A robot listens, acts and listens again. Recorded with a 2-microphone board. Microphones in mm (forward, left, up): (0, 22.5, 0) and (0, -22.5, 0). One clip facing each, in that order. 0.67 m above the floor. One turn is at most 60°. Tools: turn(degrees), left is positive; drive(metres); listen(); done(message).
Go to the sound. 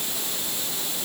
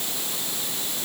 listen()
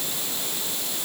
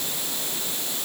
listen()
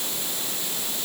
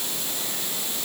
done("I can't make out anything.")